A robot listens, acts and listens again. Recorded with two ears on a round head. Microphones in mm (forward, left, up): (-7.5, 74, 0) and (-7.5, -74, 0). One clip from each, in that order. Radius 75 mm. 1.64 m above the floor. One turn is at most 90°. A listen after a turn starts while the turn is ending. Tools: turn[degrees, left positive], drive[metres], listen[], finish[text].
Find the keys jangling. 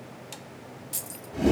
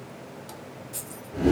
Thought: The keys jangling: about 60° left or 120° left.
Action: turn[60]
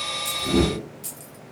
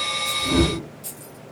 Thought: So it is at 20° left.
Action: turn[20]
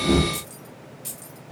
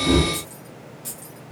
Thought: The keys jangling is now 15° left.
Action: turn[15]
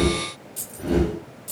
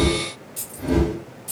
Action: finish[Facing the keys jangling, 2 to 4 m away.]